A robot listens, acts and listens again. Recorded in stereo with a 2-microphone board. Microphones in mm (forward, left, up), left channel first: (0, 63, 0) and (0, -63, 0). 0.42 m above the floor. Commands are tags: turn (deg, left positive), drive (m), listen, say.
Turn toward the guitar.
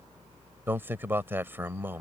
<listen/>
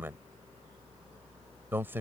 <listen/>
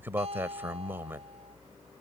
<turn deg="-60"/>
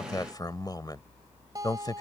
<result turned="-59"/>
<turn deg="-35"/>
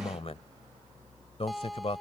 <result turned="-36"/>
<say>Found it: a guitar, straight ahead.</say>